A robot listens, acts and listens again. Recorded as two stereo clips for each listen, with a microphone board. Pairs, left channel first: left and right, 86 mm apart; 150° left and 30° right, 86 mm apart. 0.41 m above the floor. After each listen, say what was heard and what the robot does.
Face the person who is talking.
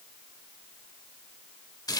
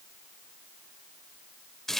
Keep listening.
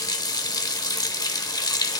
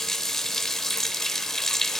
Keep listening.
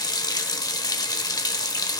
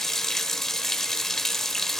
I can't make out anyone speaking to turn to.